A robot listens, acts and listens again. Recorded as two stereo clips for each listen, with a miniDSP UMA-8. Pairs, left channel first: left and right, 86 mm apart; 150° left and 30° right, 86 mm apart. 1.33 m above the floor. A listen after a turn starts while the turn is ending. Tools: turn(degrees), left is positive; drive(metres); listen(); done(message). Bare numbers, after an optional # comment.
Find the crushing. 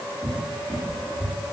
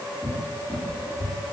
listen()
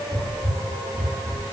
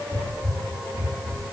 listen()
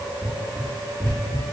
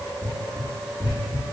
done("I can't make out crushing, only a cupboard door.")